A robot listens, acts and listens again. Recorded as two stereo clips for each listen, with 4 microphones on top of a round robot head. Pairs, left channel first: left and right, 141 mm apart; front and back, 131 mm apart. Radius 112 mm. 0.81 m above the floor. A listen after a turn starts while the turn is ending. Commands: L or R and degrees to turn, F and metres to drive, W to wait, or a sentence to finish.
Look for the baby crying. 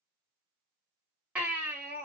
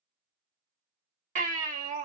R170
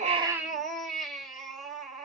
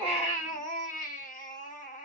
Found it: a baby crying, straight ahead.